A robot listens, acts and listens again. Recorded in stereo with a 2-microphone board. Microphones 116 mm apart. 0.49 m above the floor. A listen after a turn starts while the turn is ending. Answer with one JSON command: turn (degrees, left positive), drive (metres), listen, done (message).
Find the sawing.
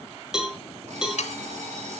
{"turn": 90}
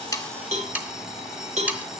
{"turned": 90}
{"turn": -15}
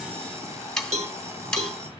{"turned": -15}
{"done": "Found it: sawing, straight ahead, 1 to 2 m away."}